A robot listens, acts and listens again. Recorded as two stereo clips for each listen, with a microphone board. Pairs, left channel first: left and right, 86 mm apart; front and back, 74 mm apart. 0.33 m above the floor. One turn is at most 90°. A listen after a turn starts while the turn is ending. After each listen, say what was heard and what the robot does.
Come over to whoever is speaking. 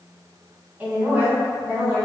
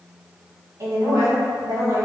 The woman speaking: 160° right. Turn 90° right.
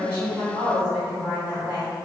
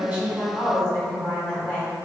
The woman speaking is now 85° right. Turn 85° right.
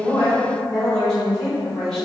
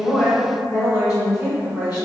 Drive 1.0 m forward.
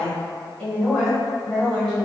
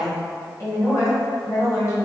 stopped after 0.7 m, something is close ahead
The woman speaking is now 10° left. Turn 10° left.
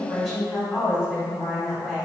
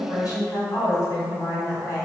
Arrived at the woman speaking, straight ahead.